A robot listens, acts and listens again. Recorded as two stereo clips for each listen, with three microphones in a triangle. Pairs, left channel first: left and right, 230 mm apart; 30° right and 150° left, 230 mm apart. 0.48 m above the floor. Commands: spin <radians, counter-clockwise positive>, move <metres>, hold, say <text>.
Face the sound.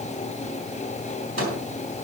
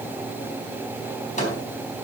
spin -1.48
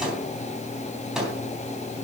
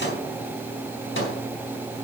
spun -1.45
say Facing the microwave, 2 to 4 m away.